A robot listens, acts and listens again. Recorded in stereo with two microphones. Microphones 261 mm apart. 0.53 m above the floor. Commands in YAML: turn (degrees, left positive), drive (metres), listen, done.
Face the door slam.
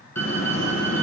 turn: 90
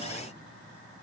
done: "I heard a door slam from this way, but can't make it out now."